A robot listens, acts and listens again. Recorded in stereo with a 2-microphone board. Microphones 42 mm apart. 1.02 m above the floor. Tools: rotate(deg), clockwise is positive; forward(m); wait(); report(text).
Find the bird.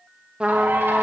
rotate(65)
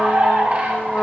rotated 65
rotate(40)
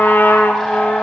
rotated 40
wait()
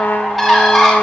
report("Found it: a bird, straight ahead.")